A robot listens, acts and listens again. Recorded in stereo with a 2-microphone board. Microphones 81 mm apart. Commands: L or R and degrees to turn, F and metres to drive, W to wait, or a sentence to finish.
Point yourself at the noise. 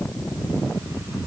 W
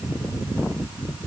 W
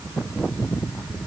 I can't make out anything.